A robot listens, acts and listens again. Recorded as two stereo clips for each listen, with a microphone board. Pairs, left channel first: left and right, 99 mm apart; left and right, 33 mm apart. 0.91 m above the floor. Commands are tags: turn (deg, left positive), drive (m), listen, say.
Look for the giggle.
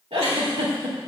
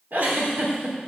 <turn deg="-70"/>
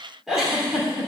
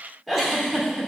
<say>Facing the giggle.</say>